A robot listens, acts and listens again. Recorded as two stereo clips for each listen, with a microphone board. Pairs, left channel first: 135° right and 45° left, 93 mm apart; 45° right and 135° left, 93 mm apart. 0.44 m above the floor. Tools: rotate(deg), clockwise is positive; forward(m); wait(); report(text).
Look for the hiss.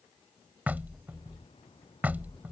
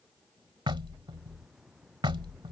rotate(140)
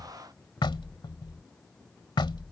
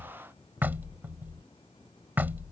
rotate(50)
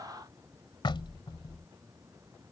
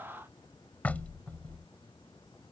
rotate(10)
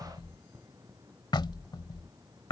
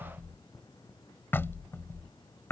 report("Facing the hiss.")